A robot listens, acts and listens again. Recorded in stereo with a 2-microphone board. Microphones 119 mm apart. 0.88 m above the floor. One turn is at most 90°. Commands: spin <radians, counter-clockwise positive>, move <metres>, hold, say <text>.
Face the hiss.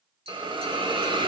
spin -0.79
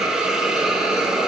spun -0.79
say Facing the hiss.